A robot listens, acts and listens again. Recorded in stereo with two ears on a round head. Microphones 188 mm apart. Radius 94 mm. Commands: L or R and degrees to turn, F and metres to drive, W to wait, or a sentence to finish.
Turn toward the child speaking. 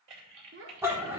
R65
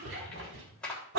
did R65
W
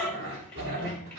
W
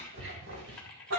I heard a child speaking, but can't make it out now. It was about straight ahead or 50° right.